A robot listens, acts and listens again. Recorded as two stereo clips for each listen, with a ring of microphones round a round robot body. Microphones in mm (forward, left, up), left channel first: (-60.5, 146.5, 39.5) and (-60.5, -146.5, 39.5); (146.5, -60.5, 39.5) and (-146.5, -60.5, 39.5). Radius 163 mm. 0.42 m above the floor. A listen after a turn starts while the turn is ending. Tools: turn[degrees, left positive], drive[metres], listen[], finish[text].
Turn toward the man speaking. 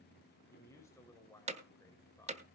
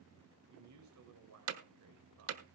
Thought: The man speaking: 170° left.
Action: turn[170]
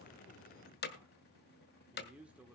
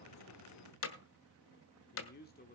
Thought: The man speaking is now 10° right.
Action: turn[-10]
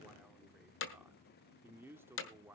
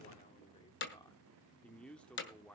Thought: The man speaking is now 65° right.
Action: turn[-65]
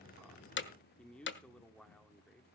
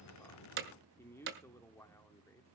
Thought: The man speaking is now 20° left.
Action: turn[20]
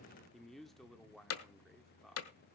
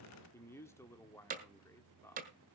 Action: finish[Facing the man speaking, 1 to 2 m away.]